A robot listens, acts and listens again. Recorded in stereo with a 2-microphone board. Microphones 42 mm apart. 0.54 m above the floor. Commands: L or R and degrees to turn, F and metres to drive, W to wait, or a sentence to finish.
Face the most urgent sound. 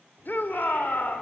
L50
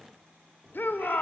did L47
L75
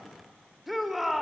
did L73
Found it: a shout, straight ahead, 1 to 2 m away.